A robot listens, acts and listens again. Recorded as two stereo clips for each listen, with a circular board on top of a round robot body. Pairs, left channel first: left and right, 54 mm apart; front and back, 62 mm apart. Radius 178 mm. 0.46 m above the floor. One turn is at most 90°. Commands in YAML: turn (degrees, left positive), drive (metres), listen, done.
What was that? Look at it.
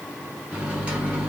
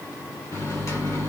turn: -25
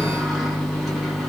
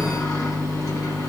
done: "Found it: a microwave, straight ahead, 1 to 2 m away."